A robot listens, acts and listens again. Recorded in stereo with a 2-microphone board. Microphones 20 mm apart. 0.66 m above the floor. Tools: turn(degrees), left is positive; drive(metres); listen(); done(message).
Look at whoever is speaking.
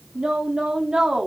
turn(degrees=-55)
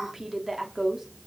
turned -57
turn(degrees=-25)
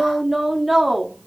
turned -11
turn(degrees=-10)
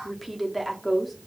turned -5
done("Found it: a woman speaking, straight ahead, 1 to 2 m away.")